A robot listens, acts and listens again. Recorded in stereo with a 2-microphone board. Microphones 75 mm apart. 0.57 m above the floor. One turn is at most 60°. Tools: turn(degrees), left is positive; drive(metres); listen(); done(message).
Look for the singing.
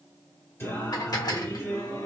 turn(degrees=40)
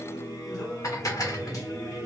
turn(degrees=45)
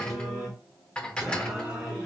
turn(degrees=-10)
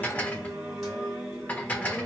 done("Found it: singing, straight ahead.")